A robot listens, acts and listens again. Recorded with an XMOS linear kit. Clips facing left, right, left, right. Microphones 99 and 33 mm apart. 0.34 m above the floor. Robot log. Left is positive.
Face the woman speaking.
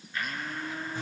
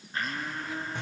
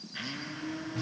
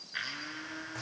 cmd idle
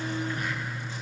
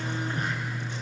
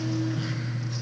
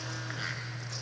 cmd idle
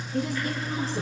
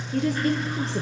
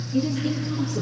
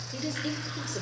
cmd yaw -90
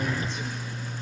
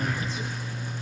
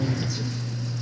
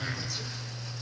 cmd idle
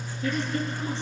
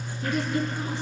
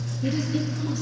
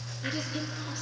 cmd idle
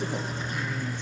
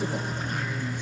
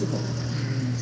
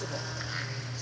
end: Facing where the woman speaking came from. I can't hear it now.